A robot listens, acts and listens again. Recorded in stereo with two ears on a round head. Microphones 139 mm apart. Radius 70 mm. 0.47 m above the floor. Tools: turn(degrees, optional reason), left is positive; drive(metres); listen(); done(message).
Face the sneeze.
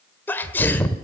turn(degrees=30)
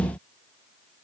listen()
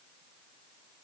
done("I heard a sneeze, but can't make it out now. It was about 15° right or 135° left.")